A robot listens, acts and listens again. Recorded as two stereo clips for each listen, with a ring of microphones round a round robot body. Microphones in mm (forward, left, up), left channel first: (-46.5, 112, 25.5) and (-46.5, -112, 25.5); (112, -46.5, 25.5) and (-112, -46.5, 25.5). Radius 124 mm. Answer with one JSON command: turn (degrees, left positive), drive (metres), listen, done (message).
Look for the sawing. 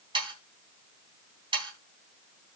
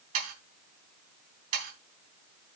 {"turn": -160}
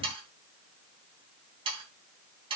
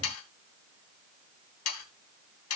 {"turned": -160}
{"turn": -20}
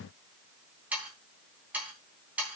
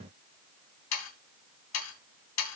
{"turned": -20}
{"done": "Facing the sawing."}